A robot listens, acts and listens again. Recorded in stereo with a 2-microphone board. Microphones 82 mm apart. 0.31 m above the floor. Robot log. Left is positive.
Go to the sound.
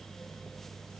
cmd idle
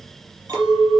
note: The clink: about 45° right or 135° right.
cmd yaw -45
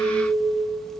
note: So it is at 90° right.
cmd yaw -90
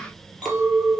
cmd fwd 1.0
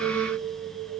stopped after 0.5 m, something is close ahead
end: Blocked. The clink is further on, straight ahead.